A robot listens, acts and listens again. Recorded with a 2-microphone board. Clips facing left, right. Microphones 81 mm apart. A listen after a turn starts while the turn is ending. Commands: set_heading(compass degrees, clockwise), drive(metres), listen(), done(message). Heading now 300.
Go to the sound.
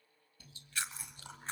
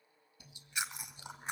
set_heading(320)
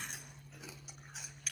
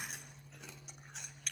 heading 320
drive(1.0)
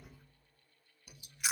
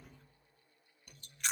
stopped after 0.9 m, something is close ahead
done("I am next to the chewing.")